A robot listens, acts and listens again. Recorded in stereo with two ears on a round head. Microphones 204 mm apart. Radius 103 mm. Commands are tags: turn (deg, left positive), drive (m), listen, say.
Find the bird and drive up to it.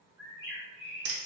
<turn deg="-30"/>
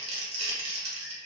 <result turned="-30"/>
<turn deg="15"/>
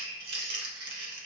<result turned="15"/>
<drive m="1.0"/>
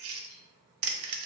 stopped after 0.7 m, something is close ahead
<listen/>
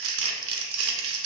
<listen/>
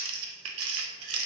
<say>Facing where the bird came from. I can't hear it now. I did not reach it.</say>